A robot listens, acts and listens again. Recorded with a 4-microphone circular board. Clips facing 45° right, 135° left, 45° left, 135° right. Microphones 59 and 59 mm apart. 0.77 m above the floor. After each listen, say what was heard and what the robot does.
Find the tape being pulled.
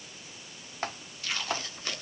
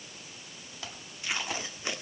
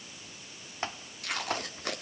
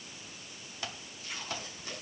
The tape being pulled: 65° left. Turn 65° left.
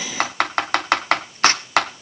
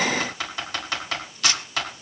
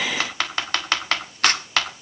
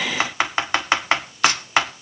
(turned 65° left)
Facing the tape being pulled.